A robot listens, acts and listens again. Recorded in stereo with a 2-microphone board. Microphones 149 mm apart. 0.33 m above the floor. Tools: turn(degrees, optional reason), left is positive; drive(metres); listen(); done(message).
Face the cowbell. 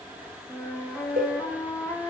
turn(degrees=-90)
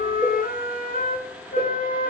turn(degrees=10, reason="So it is at 10° left.")
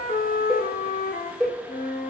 done("Facing the cowbell, 2 to 4 m away.")